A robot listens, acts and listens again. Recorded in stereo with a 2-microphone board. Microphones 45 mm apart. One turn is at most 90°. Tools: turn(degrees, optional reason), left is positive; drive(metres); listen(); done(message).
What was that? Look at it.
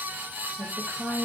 turn(degrees=-40, reason="The woman speaking: about 40° right or 140° right.")
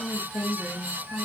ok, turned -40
turn(degrees=-10, reason="So it is at 10° right.")
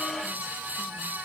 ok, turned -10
listen()
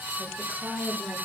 turn(degrees=-10, reason="The woman speaking is now 10° right.")
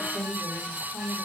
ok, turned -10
done("Found it: a woman speaking, straight ahead.")